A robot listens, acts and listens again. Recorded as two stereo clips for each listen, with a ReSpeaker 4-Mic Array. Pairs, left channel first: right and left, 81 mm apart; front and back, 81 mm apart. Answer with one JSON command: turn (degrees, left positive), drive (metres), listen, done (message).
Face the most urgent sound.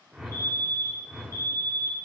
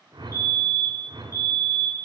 {"turn": -40}
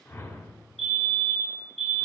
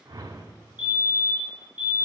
{"done": "Found it: a fire alarm, straight ahead."}